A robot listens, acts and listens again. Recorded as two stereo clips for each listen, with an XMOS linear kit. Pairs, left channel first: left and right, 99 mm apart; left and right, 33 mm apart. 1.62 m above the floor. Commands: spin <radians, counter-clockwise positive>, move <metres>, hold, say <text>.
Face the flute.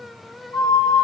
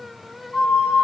spin 0.70
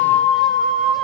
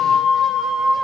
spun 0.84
say Found it: a flute, straight ahead.